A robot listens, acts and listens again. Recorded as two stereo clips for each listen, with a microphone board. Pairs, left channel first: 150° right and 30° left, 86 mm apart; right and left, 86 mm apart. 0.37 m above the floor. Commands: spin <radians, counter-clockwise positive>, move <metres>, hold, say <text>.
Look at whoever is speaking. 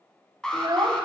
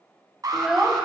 say Found it: a child speaking, straight ahead, 1 to 2 m away.